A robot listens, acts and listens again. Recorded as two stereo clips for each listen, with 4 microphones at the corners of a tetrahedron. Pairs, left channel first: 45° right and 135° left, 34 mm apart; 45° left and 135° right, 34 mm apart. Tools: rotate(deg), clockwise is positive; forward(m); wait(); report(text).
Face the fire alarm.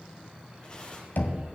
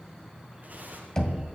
wait()
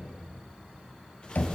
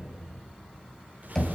wait()
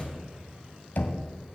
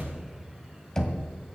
report("I can't make out a fire alarm, only tearing paper and knocking.")